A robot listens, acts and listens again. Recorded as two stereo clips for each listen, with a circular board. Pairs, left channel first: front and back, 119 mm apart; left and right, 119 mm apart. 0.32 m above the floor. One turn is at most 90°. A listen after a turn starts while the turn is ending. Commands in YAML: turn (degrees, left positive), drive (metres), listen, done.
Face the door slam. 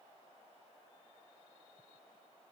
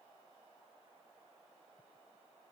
listen: true
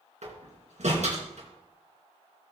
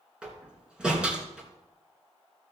turn: -90
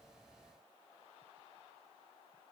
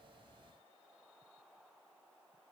turn: -80
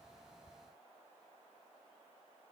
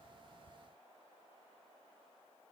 done: "Facing where the door slam came from. I can't hear it now."